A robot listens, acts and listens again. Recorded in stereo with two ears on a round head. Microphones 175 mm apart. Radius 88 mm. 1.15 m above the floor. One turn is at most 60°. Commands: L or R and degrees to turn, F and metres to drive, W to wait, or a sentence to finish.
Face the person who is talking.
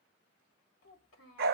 L60
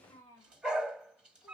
L20
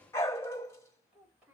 Facing the child speaking, 2 to 4 m away.